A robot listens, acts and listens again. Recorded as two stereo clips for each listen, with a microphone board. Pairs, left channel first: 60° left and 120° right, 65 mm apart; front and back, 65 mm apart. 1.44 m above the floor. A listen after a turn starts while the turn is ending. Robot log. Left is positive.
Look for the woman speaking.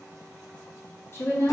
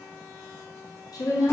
note: The woman speaking: 10° left.
cmd yaw +10
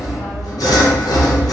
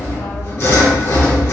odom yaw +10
cmd idle
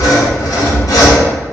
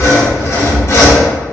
cmd idle
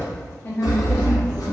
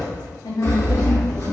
end: Found it: a woman speaking, straight ahead, under 1 m away.